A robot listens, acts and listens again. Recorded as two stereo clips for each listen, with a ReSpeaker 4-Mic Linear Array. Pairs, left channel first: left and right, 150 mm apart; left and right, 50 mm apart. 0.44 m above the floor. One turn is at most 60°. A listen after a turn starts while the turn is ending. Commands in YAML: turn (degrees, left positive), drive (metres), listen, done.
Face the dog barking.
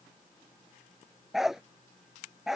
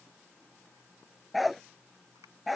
turn: -30
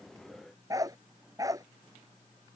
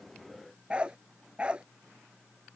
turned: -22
turn: -60
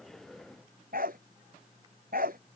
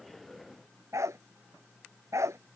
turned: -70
turn: -60
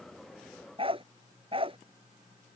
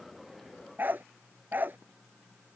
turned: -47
turn: -40
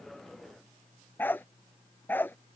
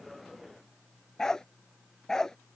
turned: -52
turn: 15
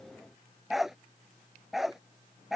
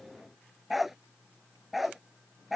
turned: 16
done: "Found it: a dog barking, straight ahead."